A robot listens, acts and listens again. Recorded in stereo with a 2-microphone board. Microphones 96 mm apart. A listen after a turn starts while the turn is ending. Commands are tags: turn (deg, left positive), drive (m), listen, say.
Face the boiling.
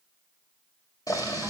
<turn deg="40"/>
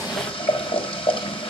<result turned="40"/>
<turn deg="100"/>
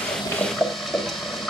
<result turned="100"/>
<say>Found it: boiling, straight ahead.</say>